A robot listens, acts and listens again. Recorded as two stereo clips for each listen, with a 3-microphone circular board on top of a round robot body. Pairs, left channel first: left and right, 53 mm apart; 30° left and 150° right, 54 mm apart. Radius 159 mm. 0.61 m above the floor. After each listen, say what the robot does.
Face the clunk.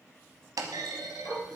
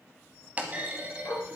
Turn 85° right.
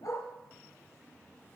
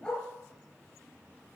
I heard a clunk from this way, but can't make it out now.